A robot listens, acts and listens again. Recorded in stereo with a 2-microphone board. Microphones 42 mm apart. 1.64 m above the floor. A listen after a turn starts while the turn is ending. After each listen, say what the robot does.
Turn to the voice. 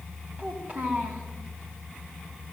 Turn 30° right.
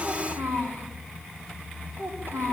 Turn 120° right.
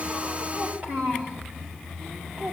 Turn 45° right.
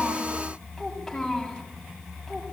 Found it: a child speaking, straight ahead.